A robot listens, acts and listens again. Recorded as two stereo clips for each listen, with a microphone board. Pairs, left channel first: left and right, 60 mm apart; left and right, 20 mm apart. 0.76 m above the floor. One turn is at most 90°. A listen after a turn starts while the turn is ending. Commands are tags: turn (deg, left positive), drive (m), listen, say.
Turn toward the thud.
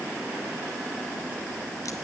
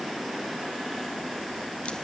<listen/>
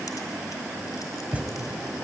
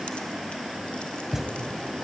<turn deg="-25"/>
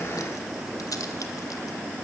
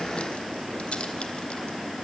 <listen/>
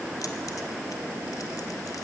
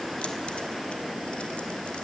<say>I heard a thud, but can't make it out now. It was about straight ahead or 130° right.</say>